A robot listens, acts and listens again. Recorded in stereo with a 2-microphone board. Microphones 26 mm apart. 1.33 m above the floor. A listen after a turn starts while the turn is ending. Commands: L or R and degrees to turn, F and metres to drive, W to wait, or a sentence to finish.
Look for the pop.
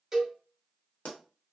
L70
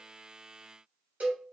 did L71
W
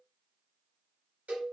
I heard a pop, but can't make it out now. It was about straight ahead or 40° left.